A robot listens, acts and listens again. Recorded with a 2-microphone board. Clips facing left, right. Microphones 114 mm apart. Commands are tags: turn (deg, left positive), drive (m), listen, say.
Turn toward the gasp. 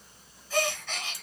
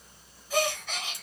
<turn deg="-30"/>
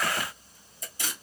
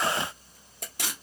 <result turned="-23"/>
<listen/>
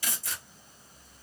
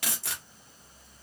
<say>I heard a gasp, but can't make it out now. It was about 10° left or 145° right.</say>